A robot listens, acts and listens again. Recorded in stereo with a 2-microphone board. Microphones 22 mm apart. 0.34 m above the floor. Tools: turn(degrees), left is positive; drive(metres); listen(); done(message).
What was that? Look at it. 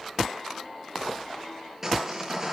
turn(degrees=-20)
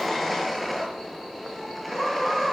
done("Facing the sawing, over 4 m away.")